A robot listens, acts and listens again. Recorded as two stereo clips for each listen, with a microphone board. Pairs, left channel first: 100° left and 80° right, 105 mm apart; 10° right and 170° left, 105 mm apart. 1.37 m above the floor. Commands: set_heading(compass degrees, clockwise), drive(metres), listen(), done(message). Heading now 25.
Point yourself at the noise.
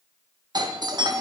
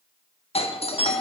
set_heading(55)
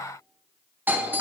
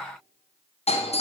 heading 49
done("Found it: a doorbell, straight ahead, 1 to 2 m away.")